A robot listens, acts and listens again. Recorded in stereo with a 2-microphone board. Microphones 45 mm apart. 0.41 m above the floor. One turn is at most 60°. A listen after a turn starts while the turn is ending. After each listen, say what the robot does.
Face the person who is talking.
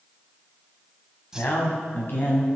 Turn 50° left.
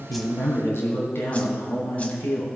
Turn 60° left.
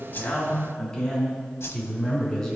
Turn 15° left.
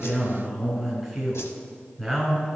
Facing the man speaking.